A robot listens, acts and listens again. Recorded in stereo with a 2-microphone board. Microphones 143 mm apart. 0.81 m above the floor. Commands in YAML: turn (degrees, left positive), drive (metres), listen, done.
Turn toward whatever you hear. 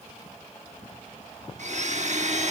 turn: -60
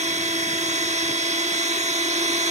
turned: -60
turn: -60
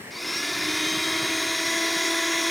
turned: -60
done: "Found it: a blender, straight ahead."